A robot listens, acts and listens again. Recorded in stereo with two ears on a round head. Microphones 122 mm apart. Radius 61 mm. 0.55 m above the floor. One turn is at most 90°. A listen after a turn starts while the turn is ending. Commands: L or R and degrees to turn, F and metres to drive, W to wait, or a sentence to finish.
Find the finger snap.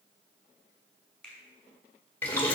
L30
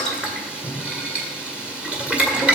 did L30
W
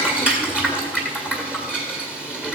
W
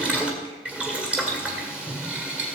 I heard a finger snap, but can't make it out now. It was about 25° right or 145° left.